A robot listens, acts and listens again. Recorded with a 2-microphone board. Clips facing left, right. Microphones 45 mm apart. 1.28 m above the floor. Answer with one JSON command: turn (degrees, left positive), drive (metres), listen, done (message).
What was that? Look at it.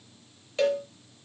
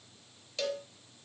{"turn": 30}
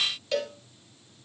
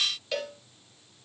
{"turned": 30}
{"done": "Found it: a cowbell, straight ahead."}